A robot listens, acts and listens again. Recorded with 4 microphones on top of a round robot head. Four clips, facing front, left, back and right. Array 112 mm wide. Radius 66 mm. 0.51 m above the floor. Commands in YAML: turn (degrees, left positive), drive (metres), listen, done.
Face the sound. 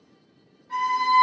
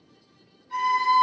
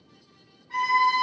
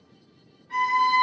turn: -40
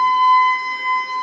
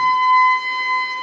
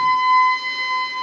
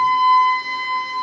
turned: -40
turn: 10
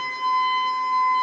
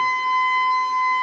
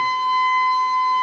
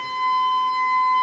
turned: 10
done: "Found it: a violin, straight ahead, 1 to 2 m away."